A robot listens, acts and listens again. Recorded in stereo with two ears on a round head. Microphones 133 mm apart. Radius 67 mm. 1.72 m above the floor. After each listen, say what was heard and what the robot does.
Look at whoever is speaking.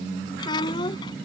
The child speaking: about 30° left or 150° left. Turn 30° left.
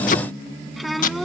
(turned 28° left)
Facing the child speaking.